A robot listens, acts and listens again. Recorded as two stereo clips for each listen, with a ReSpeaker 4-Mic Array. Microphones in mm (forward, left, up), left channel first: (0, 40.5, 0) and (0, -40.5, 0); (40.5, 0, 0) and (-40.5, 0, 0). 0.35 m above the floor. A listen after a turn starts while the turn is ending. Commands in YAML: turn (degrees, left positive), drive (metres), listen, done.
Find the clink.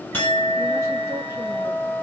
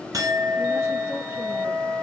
turn: 155
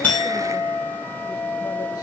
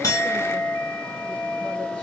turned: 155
done: "Facing the clink."